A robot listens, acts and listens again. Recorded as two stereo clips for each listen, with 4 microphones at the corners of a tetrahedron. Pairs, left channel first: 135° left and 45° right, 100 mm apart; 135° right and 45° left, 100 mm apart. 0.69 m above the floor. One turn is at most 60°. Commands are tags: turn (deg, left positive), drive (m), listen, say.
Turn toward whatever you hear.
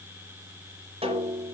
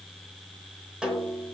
<turn deg="-40"/>
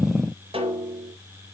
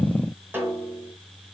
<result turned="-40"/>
<turn deg="-25"/>
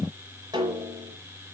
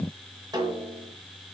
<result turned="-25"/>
<say>Facing the snare drum.</say>